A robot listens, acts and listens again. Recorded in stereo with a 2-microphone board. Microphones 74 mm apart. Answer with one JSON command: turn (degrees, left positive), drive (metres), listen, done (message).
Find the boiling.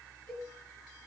{"listen": true}
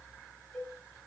{"listen": true}
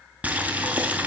{"turn": -20}
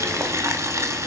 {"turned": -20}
{"turn": -140}
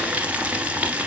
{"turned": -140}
{"turn": -20}
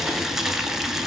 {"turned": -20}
{"done": "Found it: boiling, straight ahead."}